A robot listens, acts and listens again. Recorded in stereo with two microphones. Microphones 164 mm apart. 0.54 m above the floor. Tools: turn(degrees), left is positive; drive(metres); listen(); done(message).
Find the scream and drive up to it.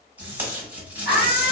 turn(degrees=65)
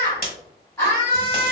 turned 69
turn(degrees=20)
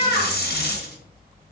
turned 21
drive(metres=1.0)
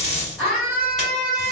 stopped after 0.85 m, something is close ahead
done("I am next to the scream.")